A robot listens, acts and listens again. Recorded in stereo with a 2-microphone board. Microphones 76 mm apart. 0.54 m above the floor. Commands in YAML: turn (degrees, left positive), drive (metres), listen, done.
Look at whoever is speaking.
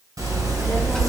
turn: 30
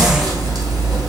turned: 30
listen: true
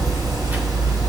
turn: -25
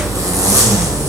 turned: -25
listen: true
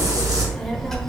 done: "Facing the child speaking."